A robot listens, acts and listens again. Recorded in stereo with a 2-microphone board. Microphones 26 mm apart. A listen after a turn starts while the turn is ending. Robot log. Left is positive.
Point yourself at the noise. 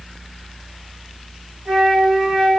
note: The flute: about 35° right or 145° right.
cmd yaw -35
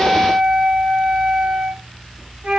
note: So it is at 110° right.
cmd yaw -110
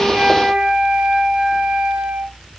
note: The flute is now 45° right.
cmd yaw -45
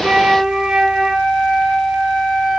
note: The flute is now 20° right.
cmd yaw -20
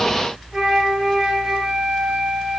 end: Found it: a flute, straight ahead.